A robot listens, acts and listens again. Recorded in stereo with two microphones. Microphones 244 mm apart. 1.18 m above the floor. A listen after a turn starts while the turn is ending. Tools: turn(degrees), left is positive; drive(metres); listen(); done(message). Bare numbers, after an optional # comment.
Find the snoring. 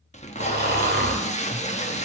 # The snoring: about 40° right or 140° right.
turn(-40)
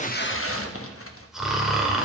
done("Facing the snoring, 1 to 2 m away.")